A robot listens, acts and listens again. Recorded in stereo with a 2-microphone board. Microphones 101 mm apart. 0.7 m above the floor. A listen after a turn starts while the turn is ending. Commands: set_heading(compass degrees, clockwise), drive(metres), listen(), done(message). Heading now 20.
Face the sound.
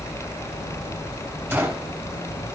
set_heading(40)
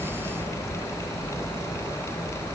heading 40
listen()
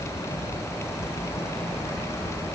done("I heard a gunshot, but can't make it out now. It was about straight ahead or 140° right.")